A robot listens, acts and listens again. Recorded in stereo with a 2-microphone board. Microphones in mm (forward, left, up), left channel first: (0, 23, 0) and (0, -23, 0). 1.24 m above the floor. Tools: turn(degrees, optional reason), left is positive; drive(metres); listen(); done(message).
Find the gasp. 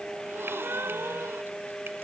turn(degrees=-65, reason="The gasp: about 65° right or 115° right.")
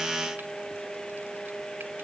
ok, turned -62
listen()
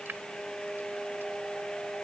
done("I heard a gasp, but can't make it out now. It was about 5° right or 55° right.")